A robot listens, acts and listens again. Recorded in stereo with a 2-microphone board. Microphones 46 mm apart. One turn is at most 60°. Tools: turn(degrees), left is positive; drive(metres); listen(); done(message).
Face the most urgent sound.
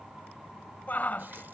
turn(degrees=40)
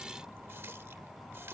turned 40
listen()
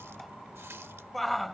done("Facing the shout.")